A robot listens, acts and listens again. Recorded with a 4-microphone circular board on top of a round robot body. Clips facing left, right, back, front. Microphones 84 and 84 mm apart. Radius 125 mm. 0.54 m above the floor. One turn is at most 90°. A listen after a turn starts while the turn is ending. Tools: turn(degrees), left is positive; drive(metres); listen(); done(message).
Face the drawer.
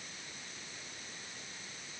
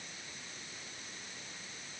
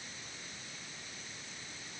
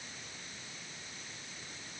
listen()
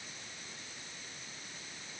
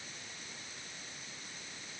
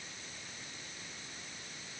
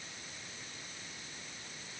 listen()
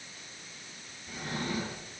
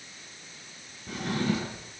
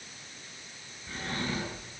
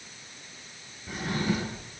turn(degrees=-80)
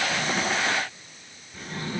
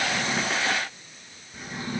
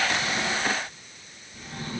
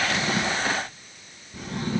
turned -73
turn(degrees=-10)
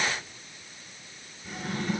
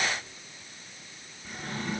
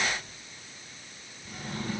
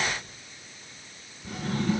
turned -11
done("Facing the drawer, over 4 m away.")